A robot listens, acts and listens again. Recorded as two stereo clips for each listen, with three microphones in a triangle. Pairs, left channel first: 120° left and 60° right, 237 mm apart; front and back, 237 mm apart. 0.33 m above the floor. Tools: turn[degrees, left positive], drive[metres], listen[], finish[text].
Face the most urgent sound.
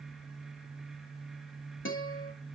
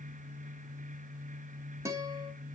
Action: listen[]
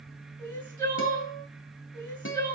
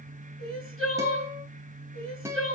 Thought: The crying: 165° right.
Action: turn[-165]
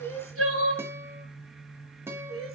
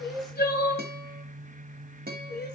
Thought: The crying is now 45° right.
Action: turn[-45]
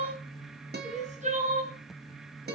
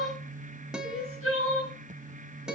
Action: finish[Found it: crying, straight ahead.]